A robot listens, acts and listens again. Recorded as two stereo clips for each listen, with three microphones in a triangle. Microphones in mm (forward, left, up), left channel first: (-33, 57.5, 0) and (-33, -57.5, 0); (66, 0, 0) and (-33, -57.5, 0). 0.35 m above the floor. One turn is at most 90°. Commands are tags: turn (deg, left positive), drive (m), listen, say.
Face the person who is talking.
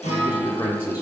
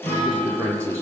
<turn deg="90"/>
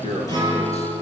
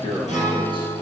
<turn deg="75"/>
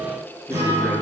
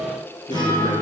<listen/>
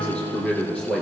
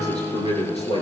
<say>Found it: a man speaking, straight ahead, over 4 m away.</say>